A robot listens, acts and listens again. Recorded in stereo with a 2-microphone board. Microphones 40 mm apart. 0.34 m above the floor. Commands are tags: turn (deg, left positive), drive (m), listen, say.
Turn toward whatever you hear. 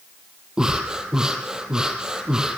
<turn deg="-15"/>
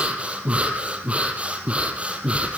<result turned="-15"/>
<turn deg="-150"/>
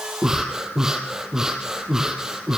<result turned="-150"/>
<turn deg="-15"/>
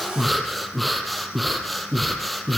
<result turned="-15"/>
<say>Facing the breathing.</say>